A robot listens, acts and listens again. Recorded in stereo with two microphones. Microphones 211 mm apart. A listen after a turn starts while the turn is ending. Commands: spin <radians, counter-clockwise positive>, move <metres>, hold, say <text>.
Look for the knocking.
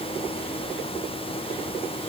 hold
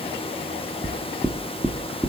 spin 0.52
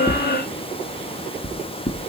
spin 2.53
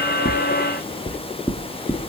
spin 0.17
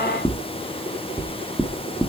say Facing the knocking.